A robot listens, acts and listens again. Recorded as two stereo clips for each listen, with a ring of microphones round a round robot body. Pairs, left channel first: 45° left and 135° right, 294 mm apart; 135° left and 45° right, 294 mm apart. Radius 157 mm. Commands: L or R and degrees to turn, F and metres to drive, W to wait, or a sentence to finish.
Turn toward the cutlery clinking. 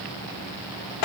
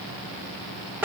W
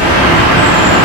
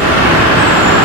W
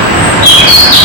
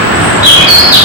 I can't make out cutlery clinking, only a bird.